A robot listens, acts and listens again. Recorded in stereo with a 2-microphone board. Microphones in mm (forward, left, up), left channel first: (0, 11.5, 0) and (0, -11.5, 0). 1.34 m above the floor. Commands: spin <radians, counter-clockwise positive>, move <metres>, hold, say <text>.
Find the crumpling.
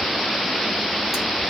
hold
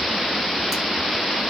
hold
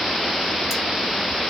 say I can't make out crumpling to turn to.